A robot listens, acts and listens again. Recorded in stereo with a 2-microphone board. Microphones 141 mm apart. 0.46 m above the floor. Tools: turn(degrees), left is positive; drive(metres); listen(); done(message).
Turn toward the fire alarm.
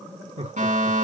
turn(degrees=-60)
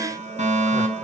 turn(degrees=-60)
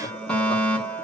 turn(degrees=10)
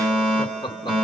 done("Found it: a fire alarm, straight ahead.")